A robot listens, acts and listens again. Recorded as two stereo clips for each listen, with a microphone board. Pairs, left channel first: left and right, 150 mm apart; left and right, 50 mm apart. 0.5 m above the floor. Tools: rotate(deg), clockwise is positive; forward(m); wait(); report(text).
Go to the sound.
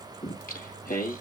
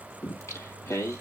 rotate(-90)
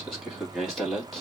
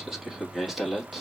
forward(1.0)
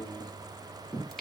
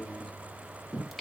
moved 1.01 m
forward(1.0)
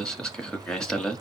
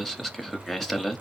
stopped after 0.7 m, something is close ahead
report("I am next to the singing.")